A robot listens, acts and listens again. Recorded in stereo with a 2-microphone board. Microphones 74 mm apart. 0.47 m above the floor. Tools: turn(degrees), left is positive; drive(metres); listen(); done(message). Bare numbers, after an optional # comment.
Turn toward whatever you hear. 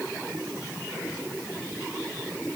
listen()
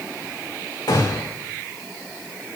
turn(90)
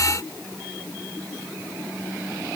done("Facing where the gunshot came from. I can't hear it now.")